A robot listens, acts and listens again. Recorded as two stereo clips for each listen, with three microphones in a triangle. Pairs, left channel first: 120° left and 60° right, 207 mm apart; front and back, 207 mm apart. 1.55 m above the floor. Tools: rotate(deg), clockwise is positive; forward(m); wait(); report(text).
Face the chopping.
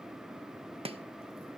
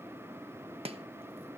rotate(120)
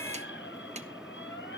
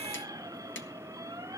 report("Facing the chopping.")